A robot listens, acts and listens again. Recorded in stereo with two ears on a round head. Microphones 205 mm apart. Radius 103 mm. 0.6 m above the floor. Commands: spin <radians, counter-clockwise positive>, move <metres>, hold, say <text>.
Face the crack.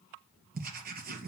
hold
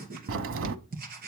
spin -1.05
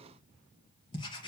hold
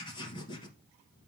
say I heard a crack, but can't make it out now. It was about straight ahead or 60° right.